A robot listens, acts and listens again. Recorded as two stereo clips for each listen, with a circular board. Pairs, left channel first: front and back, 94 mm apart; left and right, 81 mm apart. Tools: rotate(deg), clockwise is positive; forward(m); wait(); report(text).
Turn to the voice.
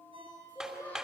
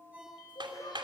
rotate(-70)
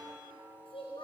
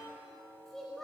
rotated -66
report("Facing the child speaking, over 4 m away.")